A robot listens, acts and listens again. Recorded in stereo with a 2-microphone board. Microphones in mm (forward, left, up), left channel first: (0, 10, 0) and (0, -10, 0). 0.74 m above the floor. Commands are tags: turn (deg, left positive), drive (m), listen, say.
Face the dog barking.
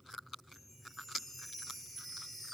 <listen/>
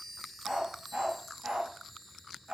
<turn deg="-90"/>
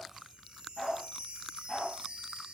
<turn deg="15"/>
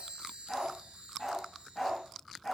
<say>Found it: a dog barking, straight ahead.</say>